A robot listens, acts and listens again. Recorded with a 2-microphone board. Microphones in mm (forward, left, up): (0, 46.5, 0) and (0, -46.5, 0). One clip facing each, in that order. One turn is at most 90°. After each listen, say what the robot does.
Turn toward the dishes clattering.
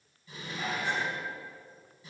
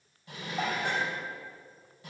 Turn 70° right.
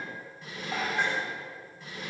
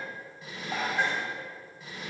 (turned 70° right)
Found it: dishes clattering, straight ahead, 2 to 4 m away.